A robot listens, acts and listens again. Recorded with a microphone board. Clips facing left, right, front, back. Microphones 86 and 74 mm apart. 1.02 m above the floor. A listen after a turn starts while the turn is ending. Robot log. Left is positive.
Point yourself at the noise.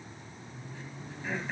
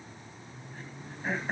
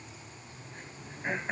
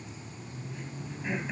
note: The throat clearing: 45° right.
cmd yaw -45
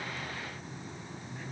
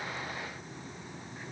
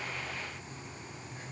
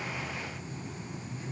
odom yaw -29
note: Nothing new. It was at 15° right.
cmd yaw -15
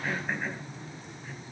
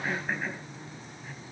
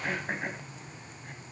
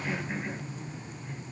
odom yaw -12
end: Facing the throat clearing, 2 to 4 m away.